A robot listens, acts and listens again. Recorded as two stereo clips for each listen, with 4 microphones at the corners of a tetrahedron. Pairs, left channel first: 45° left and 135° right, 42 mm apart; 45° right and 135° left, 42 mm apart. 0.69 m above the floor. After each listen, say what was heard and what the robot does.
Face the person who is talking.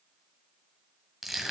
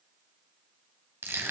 Keep listening.
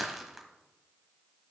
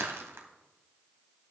Keep listening.
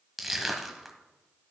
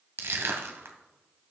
I can't make out anyone speaking, only crushing.